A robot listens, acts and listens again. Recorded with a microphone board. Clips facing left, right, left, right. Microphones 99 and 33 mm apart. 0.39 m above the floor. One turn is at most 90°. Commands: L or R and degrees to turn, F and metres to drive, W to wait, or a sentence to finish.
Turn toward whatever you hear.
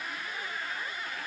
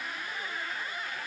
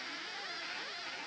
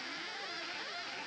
W
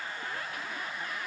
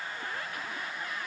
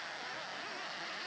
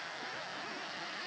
W
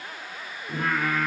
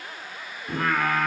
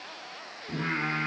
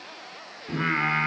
R70
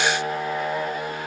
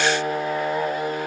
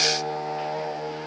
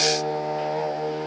Found it: singing, straight ahead.